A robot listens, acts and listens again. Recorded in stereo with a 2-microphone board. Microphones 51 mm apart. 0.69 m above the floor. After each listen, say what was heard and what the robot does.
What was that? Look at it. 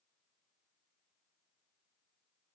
Keep listening.
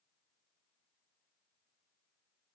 Keep listening.
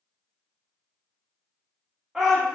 Turn 30° right.
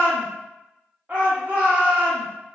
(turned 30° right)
So it is at 140° right. Turn 140° right.
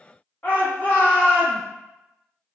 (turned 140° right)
The shout is now 45° left. Turn 45° left.
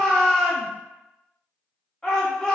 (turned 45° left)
The shout is now 15° left. Turn 15° left.
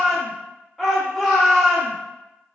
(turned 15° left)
Facing the shout, 1 to 2 m away.